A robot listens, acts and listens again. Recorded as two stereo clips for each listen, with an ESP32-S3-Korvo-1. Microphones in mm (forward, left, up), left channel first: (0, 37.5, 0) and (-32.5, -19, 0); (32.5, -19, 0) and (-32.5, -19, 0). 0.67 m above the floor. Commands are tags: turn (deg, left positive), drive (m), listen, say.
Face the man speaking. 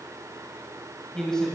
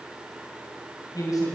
<turn deg="-20"/>
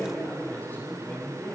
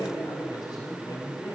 <turn deg="-10"/>
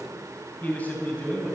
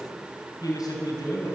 <turn deg="-10"/>
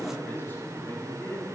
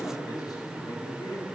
<say>Found it: a man speaking, straight ahead.</say>